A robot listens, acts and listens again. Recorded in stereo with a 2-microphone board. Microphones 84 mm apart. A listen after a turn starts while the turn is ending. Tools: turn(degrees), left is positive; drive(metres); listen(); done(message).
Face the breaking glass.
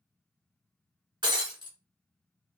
turn(degrees=-70)
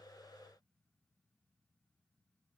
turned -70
listen()
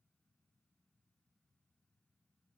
done("I heard breaking glass, but can't make it out now. It was about straight ahead or 40° right.")